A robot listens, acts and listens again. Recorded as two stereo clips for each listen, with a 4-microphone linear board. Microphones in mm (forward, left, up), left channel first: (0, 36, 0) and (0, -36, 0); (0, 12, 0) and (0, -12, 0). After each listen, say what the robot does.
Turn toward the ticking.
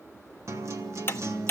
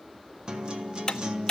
Turn 35° left.
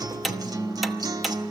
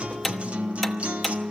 Found it: ticking, straight ahead, under 1 m away.